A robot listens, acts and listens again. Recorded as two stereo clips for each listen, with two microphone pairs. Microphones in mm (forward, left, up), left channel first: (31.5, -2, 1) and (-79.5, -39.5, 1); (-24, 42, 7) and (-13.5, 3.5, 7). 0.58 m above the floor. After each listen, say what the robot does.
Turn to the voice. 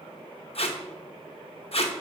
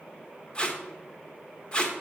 Keep listening.
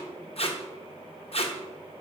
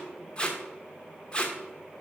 Keep listening.
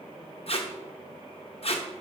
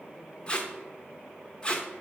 I can't make out anyone speaking, only tape being pulled.